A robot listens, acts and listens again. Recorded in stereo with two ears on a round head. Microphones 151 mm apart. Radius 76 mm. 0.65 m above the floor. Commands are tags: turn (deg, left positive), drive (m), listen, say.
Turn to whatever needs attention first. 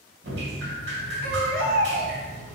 <turn deg="-60"/>
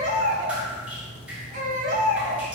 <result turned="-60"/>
<turn deg="-50"/>
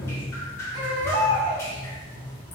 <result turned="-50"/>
<turn deg="-25"/>
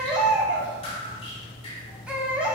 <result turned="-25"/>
<say>Found it: a baby crying, straight ahead.</say>